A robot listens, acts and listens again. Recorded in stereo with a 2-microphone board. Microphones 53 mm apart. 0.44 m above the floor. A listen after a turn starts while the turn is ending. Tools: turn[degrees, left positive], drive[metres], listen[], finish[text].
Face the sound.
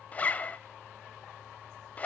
Thought: The zipper: about 30° left or 150° left.
Action: turn[30]
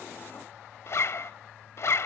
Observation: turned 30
Thought: So it is at 120° left.
Action: turn[120]
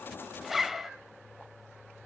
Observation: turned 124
Action: finish[Facing the zipper.]